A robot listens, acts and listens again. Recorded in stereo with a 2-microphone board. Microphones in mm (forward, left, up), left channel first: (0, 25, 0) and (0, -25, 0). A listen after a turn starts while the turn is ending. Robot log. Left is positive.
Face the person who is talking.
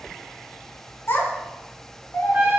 note: The child speaking: about 50° left or 130° left.
cmd yaw +50
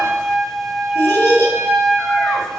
note: So it is at 70° left.
cmd yaw +70
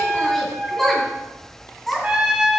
note: The child speaking is now 10° left.
cmd yaw +10
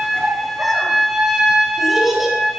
end: Facing the child speaking, 2 to 4 m away.